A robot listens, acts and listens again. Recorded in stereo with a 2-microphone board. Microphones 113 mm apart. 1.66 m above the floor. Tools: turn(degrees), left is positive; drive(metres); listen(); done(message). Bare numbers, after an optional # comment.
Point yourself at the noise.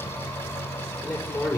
# The man speaking: about 15° left or 165° left.
turn(15)
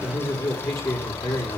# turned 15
# The man speaking: about 30° left or 150° left.
turn(30)
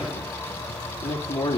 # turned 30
# So it is at 120° left.
turn(120)
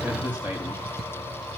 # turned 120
# The man speaking is now 15° right.
turn(-15)
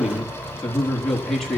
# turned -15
done("Facing the man speaking.")